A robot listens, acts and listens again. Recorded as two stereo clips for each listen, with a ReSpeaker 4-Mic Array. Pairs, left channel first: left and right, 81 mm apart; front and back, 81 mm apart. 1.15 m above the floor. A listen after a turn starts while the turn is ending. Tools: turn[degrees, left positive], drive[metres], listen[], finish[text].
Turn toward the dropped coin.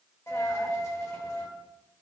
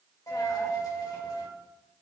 Thought: The dropped coin: 35° left.
Action: turn[35]
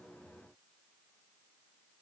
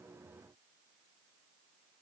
Action: finish[I heard a dropped coin from this way, but can't make it out now.]